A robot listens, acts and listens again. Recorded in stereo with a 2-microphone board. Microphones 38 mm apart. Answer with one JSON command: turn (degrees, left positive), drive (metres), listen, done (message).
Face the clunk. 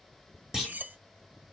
{"turn": -30}
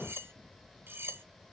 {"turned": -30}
{"listen": true}
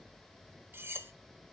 {"done": "I heard a clunk, but can't make it out now. It was about 15° left or 135° right."}